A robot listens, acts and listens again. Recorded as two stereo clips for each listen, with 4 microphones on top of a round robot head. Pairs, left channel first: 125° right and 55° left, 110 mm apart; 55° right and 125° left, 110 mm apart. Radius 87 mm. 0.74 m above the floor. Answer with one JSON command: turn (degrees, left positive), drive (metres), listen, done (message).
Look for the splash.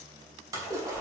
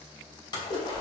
{"done": "Found it: a splash, straight ahead."}